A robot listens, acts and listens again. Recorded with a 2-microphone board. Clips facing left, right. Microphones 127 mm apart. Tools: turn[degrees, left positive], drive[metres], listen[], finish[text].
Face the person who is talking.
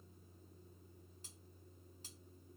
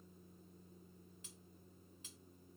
Action: listen[]
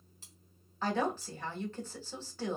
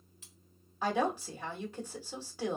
Action: turn[-30]
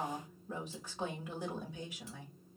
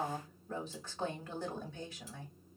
Thought: So it is at 20° left.
Action: turn[20]
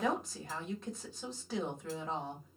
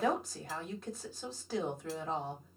Action: finish[Found it: a woman speaking, straight ahead.]